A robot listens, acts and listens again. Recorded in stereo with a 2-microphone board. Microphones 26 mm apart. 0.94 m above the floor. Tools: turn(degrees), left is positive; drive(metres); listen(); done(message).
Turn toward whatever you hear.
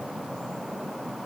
listen()
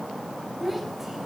turn(degrees=-30)
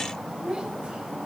turn(degrees=-140)
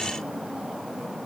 listen()
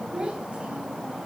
turn(degrees=-40)
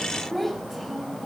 done("Facing the child speaking.")